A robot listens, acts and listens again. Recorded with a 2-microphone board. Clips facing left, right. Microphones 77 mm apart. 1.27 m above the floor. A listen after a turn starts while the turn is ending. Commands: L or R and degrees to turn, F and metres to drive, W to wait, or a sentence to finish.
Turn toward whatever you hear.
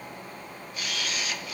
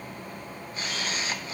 R30
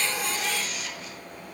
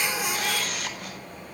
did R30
R120
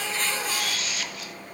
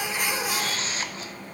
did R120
R35
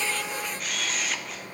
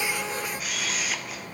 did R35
Facing the camera shutter.